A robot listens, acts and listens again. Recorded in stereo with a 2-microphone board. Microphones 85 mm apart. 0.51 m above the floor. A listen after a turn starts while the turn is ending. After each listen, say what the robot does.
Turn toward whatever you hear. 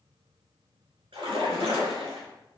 Turn 90° right.
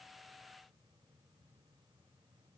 I heard a splash from this way, but can't make it out now.